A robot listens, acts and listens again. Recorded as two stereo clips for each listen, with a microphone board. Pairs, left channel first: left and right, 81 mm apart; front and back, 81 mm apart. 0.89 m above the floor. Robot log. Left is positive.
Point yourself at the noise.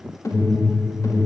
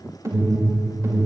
note: The alarm: 135° left.
cmd yaw +135
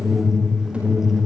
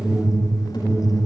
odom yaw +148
note: The alarm is now 15° right.
cmd yaw -15
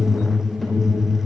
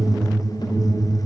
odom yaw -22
end: Found it: an alarm, straight ahead.